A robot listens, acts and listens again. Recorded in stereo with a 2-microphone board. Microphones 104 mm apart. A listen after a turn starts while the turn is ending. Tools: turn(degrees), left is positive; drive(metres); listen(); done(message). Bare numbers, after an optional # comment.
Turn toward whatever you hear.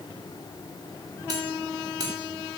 # The cutlery clinking: about 40° right or 140° right.
turn(-40)
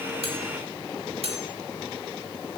# So it is at 100° right.
turn(-100)
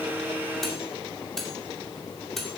done("Found it: cutlery clinking, straight ahead.")